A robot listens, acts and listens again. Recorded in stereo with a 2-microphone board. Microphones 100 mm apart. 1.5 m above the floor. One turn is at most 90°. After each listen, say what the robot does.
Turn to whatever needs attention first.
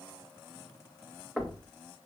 Keep listening.
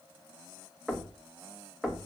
Keep listening.
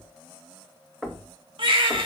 Turn 55° right.
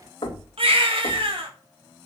Turn 70° right.
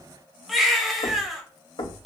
Facing the baby crying.